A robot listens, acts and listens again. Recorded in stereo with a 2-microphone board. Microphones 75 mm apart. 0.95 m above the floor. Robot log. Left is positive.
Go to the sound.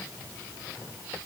cmd idle
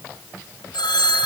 cmd yaw +90
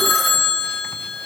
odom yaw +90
cmd fwd 1.0
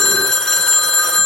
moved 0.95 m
cmd fwd 1.0
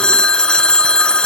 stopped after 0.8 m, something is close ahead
note: The phone ringing is now 10° left.
cmd yaw +10
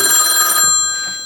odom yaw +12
end: I am next to the phone ringing.